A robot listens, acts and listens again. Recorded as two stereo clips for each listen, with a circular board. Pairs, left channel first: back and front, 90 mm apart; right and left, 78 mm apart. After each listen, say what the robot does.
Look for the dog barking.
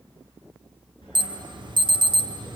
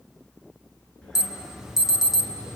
Turn 170° right.
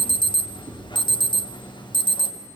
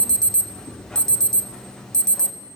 Turn 15° left.
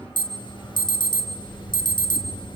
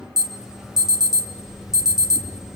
Facing the dog barking, over 4 m away.